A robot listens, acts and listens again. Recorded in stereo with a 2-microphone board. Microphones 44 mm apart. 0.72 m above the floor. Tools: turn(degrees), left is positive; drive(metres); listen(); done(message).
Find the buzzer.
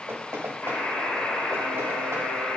turn(degrees=90)
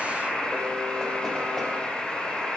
done("Facing the buzzer.")